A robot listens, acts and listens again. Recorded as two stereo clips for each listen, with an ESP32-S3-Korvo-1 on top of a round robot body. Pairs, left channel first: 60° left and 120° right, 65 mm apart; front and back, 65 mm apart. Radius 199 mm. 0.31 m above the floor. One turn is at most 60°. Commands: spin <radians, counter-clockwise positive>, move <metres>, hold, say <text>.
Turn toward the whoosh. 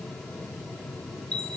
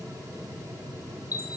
hold
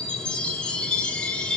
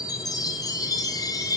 hold
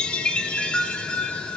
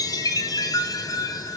say I can't make out a whoosh to turn to.